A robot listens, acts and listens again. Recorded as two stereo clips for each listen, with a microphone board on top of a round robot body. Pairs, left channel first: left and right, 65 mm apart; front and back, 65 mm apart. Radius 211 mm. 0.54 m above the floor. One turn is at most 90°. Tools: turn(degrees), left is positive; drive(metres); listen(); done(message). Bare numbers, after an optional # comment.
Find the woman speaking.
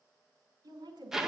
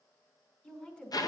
# The woman speaking: 70° right.
turn(-70)
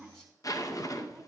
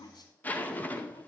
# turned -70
done("Found it: a woman speaking, straight ahead, over 4 m away.")